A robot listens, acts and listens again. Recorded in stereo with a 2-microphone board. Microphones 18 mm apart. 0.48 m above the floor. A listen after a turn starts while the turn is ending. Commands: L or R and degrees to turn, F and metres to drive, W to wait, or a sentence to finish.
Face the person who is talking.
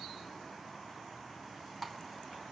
W
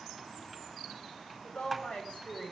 L90
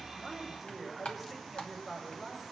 Found it: a woman speaking, straight ahead.